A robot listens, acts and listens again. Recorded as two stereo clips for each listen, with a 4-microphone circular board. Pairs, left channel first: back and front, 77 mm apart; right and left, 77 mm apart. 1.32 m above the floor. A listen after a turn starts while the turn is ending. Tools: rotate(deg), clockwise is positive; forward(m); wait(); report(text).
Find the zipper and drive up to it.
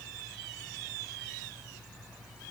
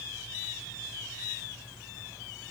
wait()
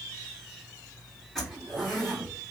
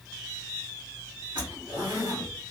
rotate(-90)
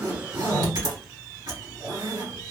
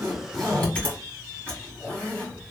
rotate(20)
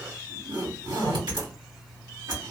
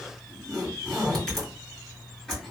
forward(1.0)
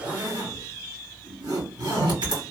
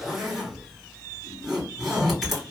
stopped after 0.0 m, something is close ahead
report("Something is in my way. I am facing the zipper but have not reached it.")